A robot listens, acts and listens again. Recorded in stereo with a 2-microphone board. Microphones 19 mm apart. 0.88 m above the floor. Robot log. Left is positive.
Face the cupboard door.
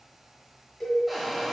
cmd yaw +30
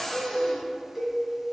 note: So it is at 140° left.
cmd yaw +140
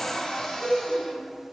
note: The cupboard door is now 55° left.
cmd yaw +55
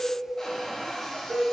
note: The cupboard door is now 35° left.
cmd yaw +35
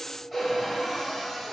end: Found it: a cupboard door, straight ahead, 1 to 2 m away.